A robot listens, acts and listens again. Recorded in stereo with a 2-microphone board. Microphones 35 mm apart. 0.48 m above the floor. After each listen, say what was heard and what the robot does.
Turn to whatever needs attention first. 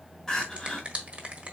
The crying: about 15° left or 165° left. Turn 15° left.
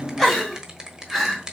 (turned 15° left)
Found it: crying, straight ahead.